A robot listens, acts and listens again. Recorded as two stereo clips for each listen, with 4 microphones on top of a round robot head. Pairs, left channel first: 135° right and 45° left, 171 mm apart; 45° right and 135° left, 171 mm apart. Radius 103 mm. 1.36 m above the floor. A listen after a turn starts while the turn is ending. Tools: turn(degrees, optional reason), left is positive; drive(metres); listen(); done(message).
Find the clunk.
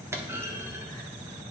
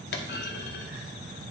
turn(degrees=-30, reason="The clunk: 30° right.")
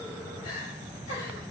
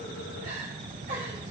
done("I heard a clunk from this way, but can't make it out now.")